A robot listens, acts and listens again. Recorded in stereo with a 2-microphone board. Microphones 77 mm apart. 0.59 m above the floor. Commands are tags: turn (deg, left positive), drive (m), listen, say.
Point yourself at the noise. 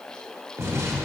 <turn deg="-40"/>
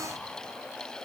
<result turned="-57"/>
<listen/>
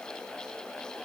<say>I heard an explosion, but can't make it out now. It was about 20° left or 85° right.</say>